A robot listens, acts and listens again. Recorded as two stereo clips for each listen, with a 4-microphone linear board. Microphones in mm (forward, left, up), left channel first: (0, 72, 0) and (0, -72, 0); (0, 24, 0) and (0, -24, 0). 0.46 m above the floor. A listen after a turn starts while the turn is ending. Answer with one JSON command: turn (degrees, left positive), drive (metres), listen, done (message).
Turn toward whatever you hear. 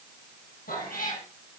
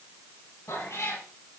{"turn": 90}
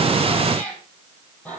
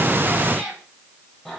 {"turn": 10}
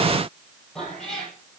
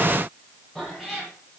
{"done": "Found it: a cat meowing, straight ahead, over 4 m away."}